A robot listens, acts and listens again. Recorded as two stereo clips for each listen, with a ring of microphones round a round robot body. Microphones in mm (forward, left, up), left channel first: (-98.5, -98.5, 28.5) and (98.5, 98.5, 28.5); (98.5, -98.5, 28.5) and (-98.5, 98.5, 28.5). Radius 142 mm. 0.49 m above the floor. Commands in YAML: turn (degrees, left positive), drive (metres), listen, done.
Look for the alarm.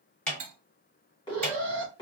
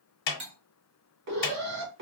turn: 155
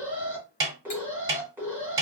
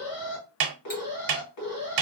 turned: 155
turn: -35
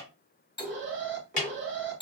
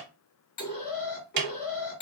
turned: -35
done: "Facing the alarm."